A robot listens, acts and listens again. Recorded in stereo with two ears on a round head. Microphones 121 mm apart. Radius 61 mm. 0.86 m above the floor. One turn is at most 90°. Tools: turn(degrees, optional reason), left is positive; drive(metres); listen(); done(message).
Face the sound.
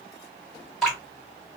turn(degrees=30)
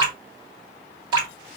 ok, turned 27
turn(degrees=-25, reason="So it is at 25° right.")
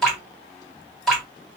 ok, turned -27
done("Facing the dripping, 1 to 2 m away.")